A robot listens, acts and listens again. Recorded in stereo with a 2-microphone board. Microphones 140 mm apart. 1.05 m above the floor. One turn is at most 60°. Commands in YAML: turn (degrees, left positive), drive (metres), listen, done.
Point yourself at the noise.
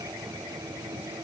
listen: true
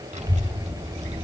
turn: -50
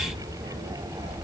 turn: -60
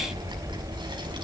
turn: -35
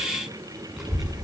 done: "Facing the child speaking, over 4 m away."